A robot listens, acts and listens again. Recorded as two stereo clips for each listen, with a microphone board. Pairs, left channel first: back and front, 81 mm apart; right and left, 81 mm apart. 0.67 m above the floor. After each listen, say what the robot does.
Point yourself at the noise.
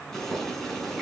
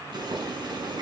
Turn 95° left.
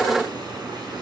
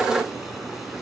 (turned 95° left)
Facing the boiling.